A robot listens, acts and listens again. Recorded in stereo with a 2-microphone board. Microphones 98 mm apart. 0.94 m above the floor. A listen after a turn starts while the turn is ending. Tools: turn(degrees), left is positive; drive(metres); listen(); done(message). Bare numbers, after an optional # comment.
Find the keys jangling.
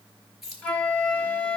turn(-30)
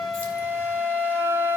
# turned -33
listen()
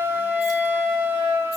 listen()
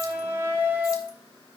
done("I heard keys jangling, but can't make it out now. It was about 30° left or 145° right.")